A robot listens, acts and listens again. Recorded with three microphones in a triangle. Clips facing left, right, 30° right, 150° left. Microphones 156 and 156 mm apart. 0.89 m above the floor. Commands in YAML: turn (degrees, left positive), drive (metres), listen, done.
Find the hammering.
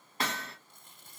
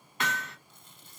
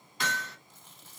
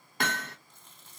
turn: 140
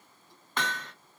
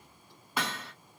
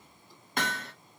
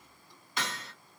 turn: -10
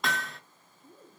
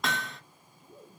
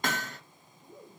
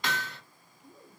done: "Found it: hammering, straight ahead, under 1 m away."